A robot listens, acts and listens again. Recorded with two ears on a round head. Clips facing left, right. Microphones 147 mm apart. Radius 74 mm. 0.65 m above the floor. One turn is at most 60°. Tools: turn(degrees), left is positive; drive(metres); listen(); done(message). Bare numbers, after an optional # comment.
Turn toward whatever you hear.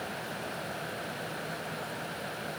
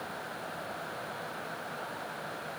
listen()
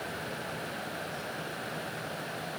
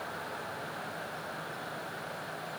listen()
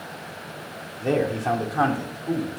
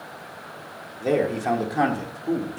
# The man speaking: about 25° right or 155° right.
turn(-25)
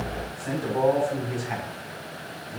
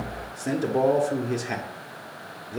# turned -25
# So it is at 130° right.
turn(-60)
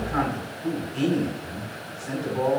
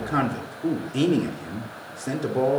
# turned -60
# The man speaking is now 65° right.
turn(-60)
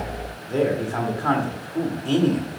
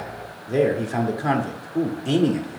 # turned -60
# The man speaking is now 20° right.
turn(-20)
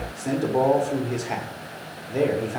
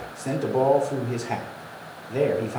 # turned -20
done("Found it: a man speaking, straight ahead, 1 to 2 m away.")